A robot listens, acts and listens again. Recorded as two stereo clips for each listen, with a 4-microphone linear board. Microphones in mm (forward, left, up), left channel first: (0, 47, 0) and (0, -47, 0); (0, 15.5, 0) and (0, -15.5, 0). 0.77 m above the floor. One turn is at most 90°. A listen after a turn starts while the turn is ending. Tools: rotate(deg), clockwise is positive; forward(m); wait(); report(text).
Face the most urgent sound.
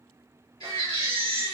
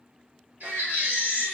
rotate(70)
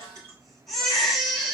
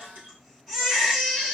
report("Found it: a baby crying, straight ahead, 2 to 4 m away.")